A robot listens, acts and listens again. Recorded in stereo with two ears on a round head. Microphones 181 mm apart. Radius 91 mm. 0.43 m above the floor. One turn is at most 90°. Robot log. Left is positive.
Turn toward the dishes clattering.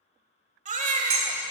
note: The dishes clattering: about 70° right or 110° right.
cmd yaw -70
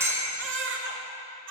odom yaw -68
note: So it is at 15° right.
cmd yaw -15
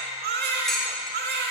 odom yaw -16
end: Facing the dishes clattering, 1 to 2 m away.